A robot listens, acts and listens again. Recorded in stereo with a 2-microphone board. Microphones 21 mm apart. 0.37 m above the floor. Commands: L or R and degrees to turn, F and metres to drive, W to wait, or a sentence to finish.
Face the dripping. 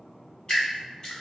L40
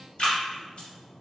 L95
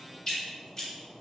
L25
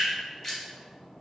L10
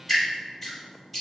Found it: dripping, straight ahead.